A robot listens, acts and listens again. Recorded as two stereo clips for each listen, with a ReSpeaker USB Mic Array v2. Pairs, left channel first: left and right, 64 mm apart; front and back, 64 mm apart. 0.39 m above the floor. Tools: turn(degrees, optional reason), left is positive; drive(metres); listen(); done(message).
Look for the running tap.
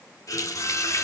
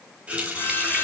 turn(degrees=110, reason="The running tap: 110° left.")
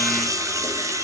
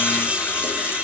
listen()
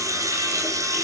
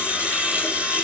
listen()
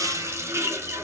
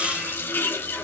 turn(degrees=-50, reason="The running tap is now 50° right.")
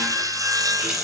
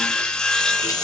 listen()
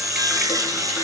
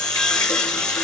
listen()
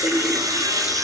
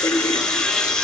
turn(degrees=-20, reason="The running tap is now 20° right.")
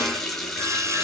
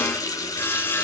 done("Found it: a running tap, straight ahead.")